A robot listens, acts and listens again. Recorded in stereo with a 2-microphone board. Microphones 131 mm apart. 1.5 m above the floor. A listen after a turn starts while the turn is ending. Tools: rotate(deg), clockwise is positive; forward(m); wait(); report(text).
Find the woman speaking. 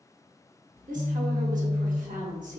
rotate(90)
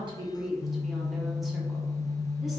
report("Found it: a woman speaking, straight ahead, under 1 m away.")